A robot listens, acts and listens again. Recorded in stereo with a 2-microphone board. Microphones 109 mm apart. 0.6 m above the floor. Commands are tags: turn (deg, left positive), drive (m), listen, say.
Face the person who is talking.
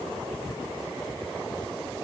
<listen/>
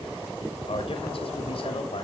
<turn deg="55"/>
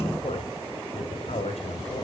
<turn deg="70"/>
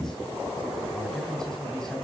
<say>Facing the man speaking.</say>